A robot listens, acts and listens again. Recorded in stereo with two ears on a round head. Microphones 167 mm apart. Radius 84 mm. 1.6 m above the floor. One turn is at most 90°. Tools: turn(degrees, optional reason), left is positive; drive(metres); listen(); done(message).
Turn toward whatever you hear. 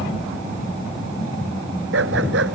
turn(degrees=-90)
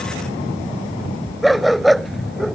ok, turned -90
done("Found it: a dog barking, straight ahead.")